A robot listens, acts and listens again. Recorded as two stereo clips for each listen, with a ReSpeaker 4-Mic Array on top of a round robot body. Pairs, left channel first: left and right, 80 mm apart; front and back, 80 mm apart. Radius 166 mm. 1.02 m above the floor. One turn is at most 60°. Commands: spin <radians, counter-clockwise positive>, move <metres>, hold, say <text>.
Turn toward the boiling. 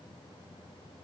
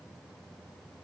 hold
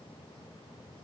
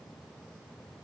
hold
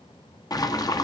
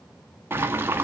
spin 1.05
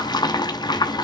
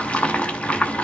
spin 1.05
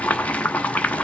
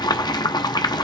spin 0.35
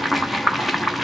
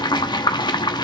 say Found it: boiling, straight ahead.